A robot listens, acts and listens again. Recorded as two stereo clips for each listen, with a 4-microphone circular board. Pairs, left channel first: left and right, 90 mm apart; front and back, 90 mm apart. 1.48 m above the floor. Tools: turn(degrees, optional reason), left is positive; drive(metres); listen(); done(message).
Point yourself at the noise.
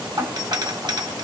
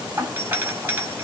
turn(degrees=-120, reason="The doorbell: 120° right.")
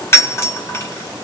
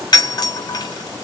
turn(degrees=35, reason="The doorbell is now 35° left.")
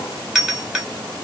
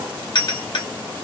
turn(degrees=-10, reason="The doorbell is now 10° right.")
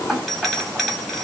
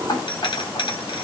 done("Facing the doorbell.")